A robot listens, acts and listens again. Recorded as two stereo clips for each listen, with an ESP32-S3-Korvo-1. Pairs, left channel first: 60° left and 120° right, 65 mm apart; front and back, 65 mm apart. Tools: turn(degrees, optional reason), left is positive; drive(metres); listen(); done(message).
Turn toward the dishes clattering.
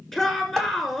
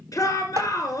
turn(degrees=145, reason="The dishes clattering: 145° left.")
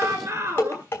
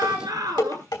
done("Found it: dishes clattering, straight ahead.")